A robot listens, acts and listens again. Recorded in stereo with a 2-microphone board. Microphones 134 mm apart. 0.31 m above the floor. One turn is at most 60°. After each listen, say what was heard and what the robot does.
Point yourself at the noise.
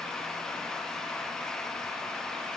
Keep listening.
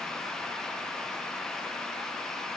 Keep listening.
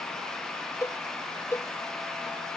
The cowbell: about 20° left or 160° left. Turn 20° left.
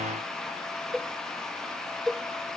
Facing the cowbell.